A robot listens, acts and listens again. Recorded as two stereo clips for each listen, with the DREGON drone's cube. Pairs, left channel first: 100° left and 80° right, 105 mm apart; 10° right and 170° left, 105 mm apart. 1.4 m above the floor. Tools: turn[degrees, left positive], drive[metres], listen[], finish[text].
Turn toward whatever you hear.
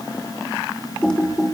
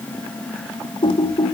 Thought: The typing on a keyboard: 20° left.
Action: turn[20]
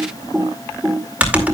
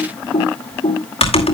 Action: finish[Found it: typing on a keyboard, straight ahead.]